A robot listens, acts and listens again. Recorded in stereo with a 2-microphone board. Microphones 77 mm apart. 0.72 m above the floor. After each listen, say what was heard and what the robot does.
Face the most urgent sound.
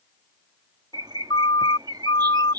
Turn 90° left.
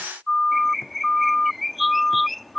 Facing the siren.